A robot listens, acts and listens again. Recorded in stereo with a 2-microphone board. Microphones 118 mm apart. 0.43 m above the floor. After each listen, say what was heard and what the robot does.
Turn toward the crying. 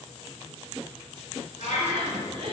The crying: about 55° right or 125° right. Turn 55° right.
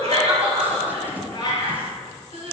So it is at 70° right. Turn 70° right.
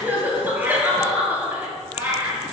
The crying is now 15° right. Turn 15° right.
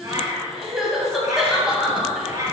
Facing the crying.